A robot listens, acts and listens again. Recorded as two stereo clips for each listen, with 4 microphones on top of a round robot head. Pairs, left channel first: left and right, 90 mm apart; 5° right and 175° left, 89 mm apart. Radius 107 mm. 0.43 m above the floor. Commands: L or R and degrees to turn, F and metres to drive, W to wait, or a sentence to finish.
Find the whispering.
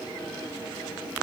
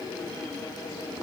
W
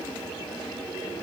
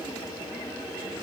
W
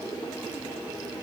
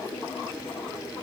I can't make out whispering.